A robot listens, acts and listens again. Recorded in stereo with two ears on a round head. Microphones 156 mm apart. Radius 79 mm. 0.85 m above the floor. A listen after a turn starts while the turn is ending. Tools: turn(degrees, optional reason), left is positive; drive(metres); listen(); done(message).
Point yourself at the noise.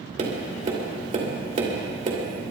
turn(degrees=-40, reason="The tapping: about 40° right or 140° right.")
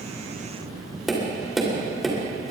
done("Found it: tapping, straight ahead.")